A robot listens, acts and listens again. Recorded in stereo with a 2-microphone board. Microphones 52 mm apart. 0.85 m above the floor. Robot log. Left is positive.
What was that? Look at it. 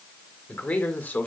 note: The man speaking: about 35° left or 145° left.
cmd yaw +35
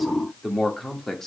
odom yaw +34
note: So it is at 10° left.
cmd yaw +10
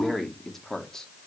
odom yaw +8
note: The man speaking is now 10° left.
cmd yaw +10
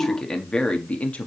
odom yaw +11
note: The man speaking is now 25° left.
cmd yaw +25
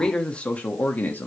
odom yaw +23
note: The man speaking is now 35° left.
cmd yaw +35
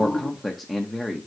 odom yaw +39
end: Found it: a man speaking, straight ahead, 1 to 2 m away.